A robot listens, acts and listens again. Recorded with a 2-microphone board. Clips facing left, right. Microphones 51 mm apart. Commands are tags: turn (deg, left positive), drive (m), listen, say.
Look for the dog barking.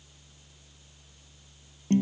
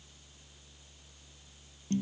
<listen/>
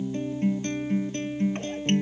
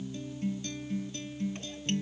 <listen/>
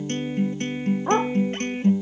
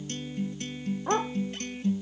<turn deg="20"/>
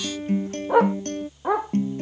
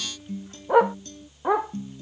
<say>Facing the dog barking.</say>